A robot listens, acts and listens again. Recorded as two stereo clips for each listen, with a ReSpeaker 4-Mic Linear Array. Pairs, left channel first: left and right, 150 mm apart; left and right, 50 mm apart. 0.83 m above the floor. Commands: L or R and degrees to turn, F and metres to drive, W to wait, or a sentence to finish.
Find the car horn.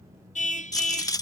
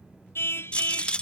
L55
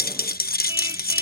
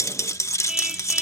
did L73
R15
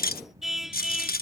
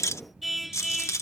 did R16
Found it: a car horn, straight ahead.